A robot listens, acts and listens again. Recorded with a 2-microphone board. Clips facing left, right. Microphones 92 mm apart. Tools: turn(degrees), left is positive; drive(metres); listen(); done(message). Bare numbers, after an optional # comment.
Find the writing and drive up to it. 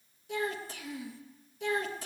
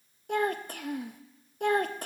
listen()
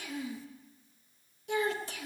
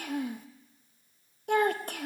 listen()
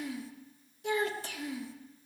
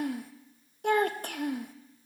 done("I can't make out writing, only a child speaking.")